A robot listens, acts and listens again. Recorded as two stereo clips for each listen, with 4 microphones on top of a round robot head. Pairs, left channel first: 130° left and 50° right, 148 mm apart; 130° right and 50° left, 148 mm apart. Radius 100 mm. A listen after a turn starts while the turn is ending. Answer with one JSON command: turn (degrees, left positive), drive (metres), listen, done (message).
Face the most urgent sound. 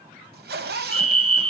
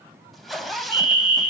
{"done": "Found it: a fire alarm, straight ahead, over 4 m away."}